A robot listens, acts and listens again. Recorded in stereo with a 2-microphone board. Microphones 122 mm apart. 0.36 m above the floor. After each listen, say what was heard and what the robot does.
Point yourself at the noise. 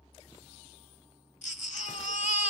Turn 90° left.
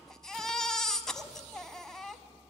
Found it: a baby crying, straight ahead.